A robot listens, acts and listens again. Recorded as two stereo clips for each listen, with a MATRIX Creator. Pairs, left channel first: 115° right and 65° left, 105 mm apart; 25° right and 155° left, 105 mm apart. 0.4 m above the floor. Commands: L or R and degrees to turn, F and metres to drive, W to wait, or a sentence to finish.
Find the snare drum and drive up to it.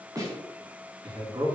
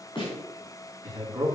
L15
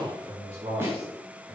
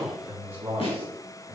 F1.0
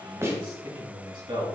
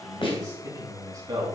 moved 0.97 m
F1.0
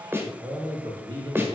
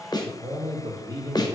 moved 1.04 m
F1.0
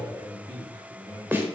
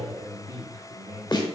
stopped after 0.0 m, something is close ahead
Arrived at the snare drum, straight ahead.